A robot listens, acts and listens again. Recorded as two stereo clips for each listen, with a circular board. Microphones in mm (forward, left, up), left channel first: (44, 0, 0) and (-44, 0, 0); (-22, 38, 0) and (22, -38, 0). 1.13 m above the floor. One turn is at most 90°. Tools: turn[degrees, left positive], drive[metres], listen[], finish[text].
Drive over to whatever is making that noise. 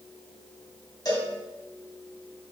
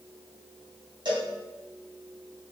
Thought: The cowbell: 40° right.
Action: turn[-40]
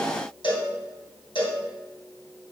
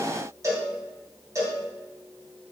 Thought: The cowbell is now 10° right.
Action: turn[-10]
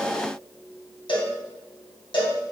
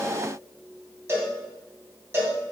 Action: drive[1.0]
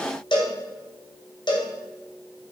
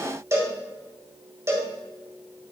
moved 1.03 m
Action: drive[1.0]
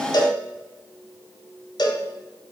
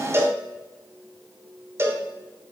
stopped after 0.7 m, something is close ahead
Action: finish[I am next to the cowbell.]